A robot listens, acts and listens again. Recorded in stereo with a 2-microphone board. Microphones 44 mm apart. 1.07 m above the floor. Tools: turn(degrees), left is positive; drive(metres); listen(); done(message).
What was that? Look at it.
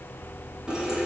turn(degrees=-20)
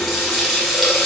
done("Found it: a running tap, straight ahead.")